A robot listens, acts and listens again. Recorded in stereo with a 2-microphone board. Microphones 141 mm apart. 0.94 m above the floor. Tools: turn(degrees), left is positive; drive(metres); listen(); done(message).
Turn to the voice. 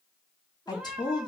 turn(degrees=30)
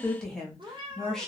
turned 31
done("Facing the woman speaking, 1 to 2 m away.")